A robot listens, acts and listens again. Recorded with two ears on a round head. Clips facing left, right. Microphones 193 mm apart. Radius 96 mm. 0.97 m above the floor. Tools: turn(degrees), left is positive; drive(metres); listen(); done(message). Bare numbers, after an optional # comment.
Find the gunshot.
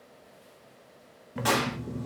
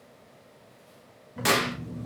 # The gunshot: about 30° right or 150° right.
turn(-30)
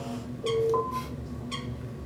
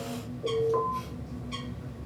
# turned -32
listen()
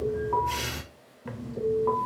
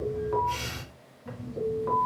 done("I heard a gunshot, but can't make it out now. It was about 5° left or 120° right.")